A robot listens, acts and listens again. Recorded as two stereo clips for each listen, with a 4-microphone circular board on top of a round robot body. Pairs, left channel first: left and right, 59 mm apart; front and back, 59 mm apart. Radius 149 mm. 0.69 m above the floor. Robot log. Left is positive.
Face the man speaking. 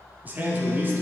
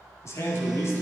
note: The man speaking: 35° right.
cmd yaw -35
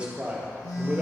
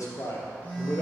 note: The man speaking is now 20° right.
cmd yaw -20
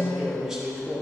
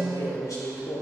note: The man speaking is now 10° right.
cmd yaw -10
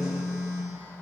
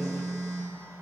cmd idle
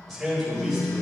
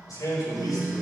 end: Facing the man speaking.